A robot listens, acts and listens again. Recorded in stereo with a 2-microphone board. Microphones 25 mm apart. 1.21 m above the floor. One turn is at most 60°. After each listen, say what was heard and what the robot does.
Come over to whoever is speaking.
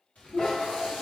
The child speaking: about 50° left or 130° left. Turn 50° left.
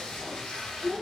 Drive 1.0 m forward.
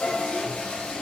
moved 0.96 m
Keep listening.
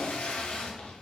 Keep listening.
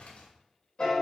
I heard a child speaking from this way, but can't make it out now. I did not reach it.